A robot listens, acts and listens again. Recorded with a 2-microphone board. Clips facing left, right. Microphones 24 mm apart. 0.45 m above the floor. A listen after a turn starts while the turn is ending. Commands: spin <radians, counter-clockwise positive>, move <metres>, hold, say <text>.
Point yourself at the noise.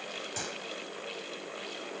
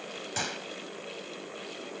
spin -0.52
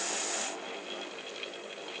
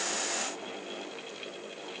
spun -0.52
hold
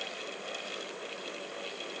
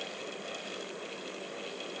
say I heard a gunshot, but can't make it out now. It was about straight ahead or 120° right.